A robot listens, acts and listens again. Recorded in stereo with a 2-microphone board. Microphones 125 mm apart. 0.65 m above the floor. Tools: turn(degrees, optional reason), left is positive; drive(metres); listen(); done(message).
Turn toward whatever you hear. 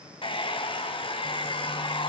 turn(degrees=45, reason="The hair dryer: about 45° left or 135° left.")
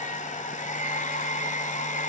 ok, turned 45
turn(degrees=95, reason="So it is at 95° left.")
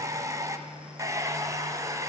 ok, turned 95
turn(degrees=-25, reason="The hair dryer is now 25° right.")
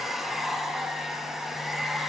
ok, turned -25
done("Facing the hair dryer.")